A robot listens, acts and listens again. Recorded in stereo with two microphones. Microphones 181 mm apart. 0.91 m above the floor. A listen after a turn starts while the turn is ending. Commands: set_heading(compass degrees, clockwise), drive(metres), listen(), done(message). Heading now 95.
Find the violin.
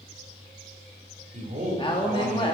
listen()
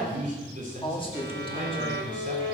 set_heading(170)
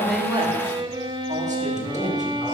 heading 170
set_heading(195)
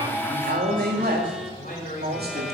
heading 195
listen()
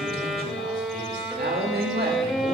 done("Found it: a violin, straight ahead, 1 to 2 m away.")